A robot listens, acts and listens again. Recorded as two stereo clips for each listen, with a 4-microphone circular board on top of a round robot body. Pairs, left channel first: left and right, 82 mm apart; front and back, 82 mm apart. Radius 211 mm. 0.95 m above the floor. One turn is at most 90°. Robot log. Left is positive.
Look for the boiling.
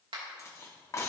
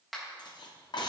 cmd idle
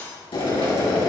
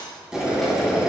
note: The boiling: 100° left.
cmd yaw +90
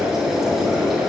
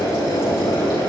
end: Facing the boiling, 2 to 4 m away.